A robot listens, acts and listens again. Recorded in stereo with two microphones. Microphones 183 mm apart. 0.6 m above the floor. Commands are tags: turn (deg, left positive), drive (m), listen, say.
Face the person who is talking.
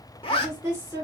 <turn deg="-15"/>
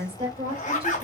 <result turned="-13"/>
<turn deg="-150"/>
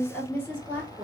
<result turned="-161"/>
<turn deg="10"/>
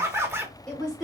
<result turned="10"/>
<say>Found it: a woman speaking, straight ahead, 2 to 4 m away.</say>